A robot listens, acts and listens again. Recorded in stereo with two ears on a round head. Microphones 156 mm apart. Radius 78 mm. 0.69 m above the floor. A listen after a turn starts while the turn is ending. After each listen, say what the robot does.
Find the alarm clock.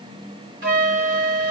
Keep listening.
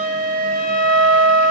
Keep listening.
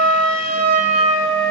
I can't make out an alarm clock to turn to.